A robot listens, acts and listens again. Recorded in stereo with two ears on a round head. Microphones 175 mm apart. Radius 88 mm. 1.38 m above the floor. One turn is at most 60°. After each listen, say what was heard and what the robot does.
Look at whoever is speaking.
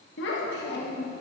The child speaking: about 55° left or 125° left. Turn 55° left.
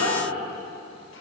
So it is at 80° left. Turn 60° left.
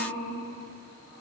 The child speaking is now 45° left. Turn 45° left.
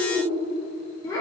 The child speaking is now 20° left. Turn 20° left.
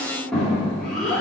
Found it: a child speaking, straight ahead.